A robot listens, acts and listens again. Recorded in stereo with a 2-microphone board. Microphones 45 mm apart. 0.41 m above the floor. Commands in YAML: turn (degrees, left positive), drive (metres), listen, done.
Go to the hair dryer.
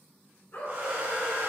turn: -40
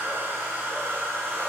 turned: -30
turn: -100
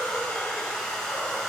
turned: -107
drive: 1.0
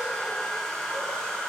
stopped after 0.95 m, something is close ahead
turn: 15
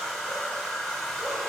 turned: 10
done: "Arrived at the hair dryer, straight ahead."